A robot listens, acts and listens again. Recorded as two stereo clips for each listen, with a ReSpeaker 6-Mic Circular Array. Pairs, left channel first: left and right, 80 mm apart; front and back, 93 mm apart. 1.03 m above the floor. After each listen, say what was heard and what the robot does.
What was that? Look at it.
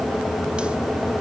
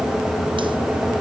Keep listening.
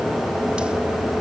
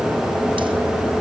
Keep listening.
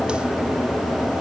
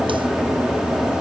I can't make out anything.